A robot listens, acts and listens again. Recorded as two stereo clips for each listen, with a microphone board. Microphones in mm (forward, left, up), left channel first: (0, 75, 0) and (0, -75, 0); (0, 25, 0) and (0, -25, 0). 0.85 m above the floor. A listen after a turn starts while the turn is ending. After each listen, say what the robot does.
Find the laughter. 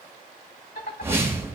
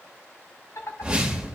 Turn 70° left.
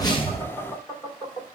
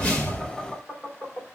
Turn 25° left.
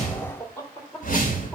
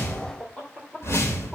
Turn 15° left.
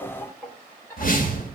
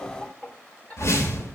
Turn 15° left.
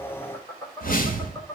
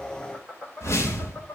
Turn 15° left.
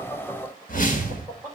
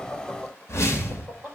Found it: laughter, straight ahead, 2 to 4 m away.